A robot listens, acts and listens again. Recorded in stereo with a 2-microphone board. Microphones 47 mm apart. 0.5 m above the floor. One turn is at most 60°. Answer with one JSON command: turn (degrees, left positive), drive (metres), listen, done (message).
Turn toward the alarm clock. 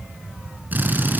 {"listen": true}
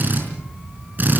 {"listen": true}
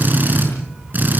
{"done": "I can't make out an alarm clock to turn to."}